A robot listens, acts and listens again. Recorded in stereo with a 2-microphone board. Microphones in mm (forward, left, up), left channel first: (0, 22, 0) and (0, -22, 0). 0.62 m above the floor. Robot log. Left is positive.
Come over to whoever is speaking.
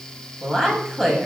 cmd yaw +30
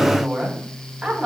note: So it is at 15° right.
cmd yaw -15
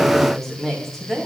cmd fwd 1.0
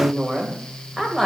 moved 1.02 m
cmd fwd 1.0
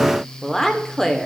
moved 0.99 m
note: The woman speaking is now 10° left.
cmd yaw +10
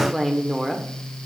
cmd fwd 1.0
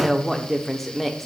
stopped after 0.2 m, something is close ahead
end: I am next to the woman speaking.